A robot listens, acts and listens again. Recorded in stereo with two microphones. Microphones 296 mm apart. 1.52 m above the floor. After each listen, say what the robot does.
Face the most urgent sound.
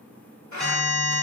Turn 30° left.
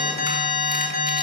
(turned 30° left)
Turn 150° left.
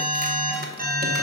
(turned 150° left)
Turn 30° right.
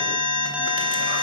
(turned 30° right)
Facing the alarm.